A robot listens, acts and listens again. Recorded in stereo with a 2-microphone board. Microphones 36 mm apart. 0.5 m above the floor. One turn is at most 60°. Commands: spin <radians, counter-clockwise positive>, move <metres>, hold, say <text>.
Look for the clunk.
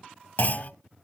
spin 0.96
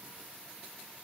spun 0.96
hold
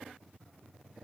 say I heard a clunk, but can't make it out now. It was about straight ahead or 70° left.